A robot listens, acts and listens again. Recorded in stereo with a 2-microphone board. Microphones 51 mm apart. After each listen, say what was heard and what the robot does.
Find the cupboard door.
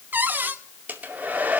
The cupboard door: about 35° right or 145° right. Turn 35° right.
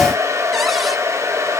Keep listening.
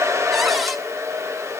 Keep listening.
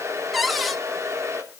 Facing the cupboard door.